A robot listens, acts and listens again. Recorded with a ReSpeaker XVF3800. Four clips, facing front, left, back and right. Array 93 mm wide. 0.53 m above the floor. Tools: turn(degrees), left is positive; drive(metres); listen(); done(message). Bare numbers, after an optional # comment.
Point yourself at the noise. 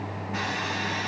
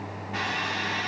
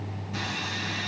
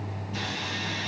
# The sawing: 50° left.
turn(50)
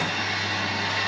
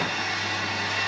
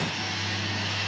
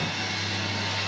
# The sawing is now 25° left.
turn(25)
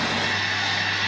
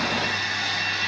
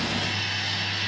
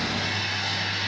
done("Found it: sawing, straight ahead.")